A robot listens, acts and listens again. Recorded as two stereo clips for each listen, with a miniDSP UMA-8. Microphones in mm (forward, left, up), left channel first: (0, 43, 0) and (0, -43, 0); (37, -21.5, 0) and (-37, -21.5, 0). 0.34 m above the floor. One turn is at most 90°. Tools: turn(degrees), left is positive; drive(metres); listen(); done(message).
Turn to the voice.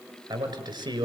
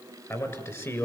turn(degrees=-50)
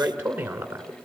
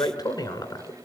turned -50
turn(degrees=-20)
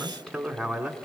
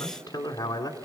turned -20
done("Found it: a man speaking, straight ahead.")